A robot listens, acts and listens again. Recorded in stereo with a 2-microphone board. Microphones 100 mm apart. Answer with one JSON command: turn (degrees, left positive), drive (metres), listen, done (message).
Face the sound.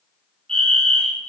{"turn": 30}
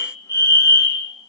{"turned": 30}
{"turn": 140}
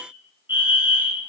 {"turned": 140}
{"turn": -25}
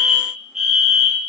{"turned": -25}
{"done": "Found it: a fire alarm, straight ahead."}